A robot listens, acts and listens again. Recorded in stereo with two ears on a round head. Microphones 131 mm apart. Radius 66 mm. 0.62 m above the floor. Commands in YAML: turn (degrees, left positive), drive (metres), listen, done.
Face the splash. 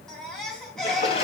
turn: 40
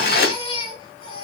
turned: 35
turn: 105
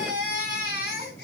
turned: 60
turn: 45
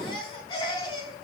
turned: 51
turn: -10
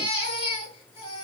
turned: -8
done: "Facing where the splash came from. I can't hear it now."